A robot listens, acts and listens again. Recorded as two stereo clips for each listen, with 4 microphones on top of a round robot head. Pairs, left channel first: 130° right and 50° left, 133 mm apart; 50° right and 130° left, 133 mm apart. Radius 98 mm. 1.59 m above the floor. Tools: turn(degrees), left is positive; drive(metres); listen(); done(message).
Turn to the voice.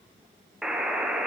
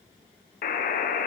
listen()
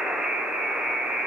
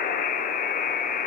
listen()
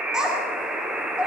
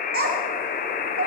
turn(degrees=135)
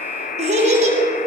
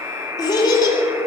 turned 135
turn(degrees=10)
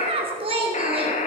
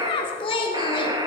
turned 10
done("Facing the child speaking.")